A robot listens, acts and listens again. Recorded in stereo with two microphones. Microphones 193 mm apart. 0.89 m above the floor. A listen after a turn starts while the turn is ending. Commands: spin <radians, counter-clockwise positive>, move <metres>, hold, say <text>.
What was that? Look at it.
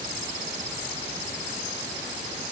hold
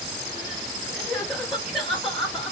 spin 0.52
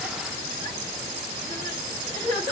spin -0.52
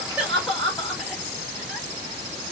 say Facing the crying.